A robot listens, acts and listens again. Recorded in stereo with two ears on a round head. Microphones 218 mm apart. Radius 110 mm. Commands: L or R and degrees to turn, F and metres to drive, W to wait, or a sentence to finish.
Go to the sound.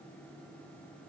W
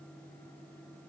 W
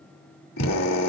L70
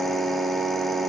F1.0
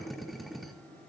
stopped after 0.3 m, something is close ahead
Something is in my way. I am facing the drill but have not reached it.